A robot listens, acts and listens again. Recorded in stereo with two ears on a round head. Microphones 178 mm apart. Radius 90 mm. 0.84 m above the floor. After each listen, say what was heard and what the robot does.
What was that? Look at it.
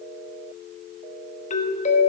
The doorbell: about 35° left or 145° left. Turn 35° left.
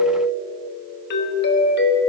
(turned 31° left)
So it is at 105° left. Turn 105° left.
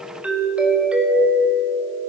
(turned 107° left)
Found it: a doorbell, straight ahead, 1 to 2 m away.